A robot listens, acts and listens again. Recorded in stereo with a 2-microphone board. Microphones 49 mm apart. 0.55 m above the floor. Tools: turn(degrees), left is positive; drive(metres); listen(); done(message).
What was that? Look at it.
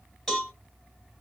turn(degrees=30)
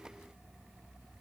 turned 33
listen()
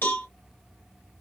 turn(degrees=140)
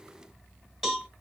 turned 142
done("Facing the cowbell.")